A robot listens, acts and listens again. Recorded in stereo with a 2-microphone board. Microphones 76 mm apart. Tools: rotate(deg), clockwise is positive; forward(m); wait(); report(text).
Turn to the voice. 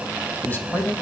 rotate(-25)
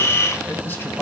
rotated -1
rotate(-25)
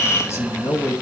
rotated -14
rotate(-140)
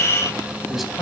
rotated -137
report("Facing the man speaking.")